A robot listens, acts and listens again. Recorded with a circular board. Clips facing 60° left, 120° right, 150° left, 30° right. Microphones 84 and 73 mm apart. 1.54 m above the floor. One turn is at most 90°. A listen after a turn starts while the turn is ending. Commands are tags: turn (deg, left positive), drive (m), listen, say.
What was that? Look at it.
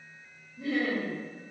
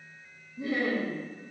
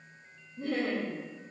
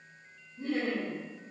<turn deg="90"/>
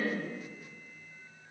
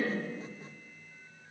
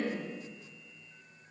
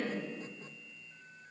<turn deg="80"/>
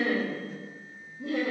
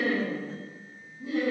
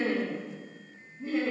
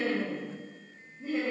<turn deg="60"/>
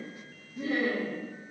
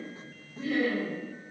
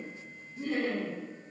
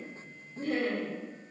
<say>Facing the laughter, 2 to 4 m away.</say>